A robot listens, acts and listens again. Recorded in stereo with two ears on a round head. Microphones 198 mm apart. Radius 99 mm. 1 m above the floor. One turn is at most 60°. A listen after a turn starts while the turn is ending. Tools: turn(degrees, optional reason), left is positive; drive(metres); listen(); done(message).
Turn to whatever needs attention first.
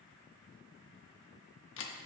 listen()
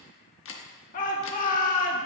turn(degrees=35, reason="The shout: about 35° left or 145° left.")
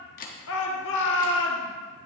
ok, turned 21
turn(degrees=60, reason="So it is at 120° left.")
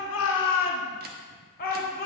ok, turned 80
turn(degrees=40, reason="The shout is now 40° left.")
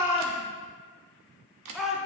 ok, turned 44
done("Found it: a shout, straight ahead, 1 to 2 m away.")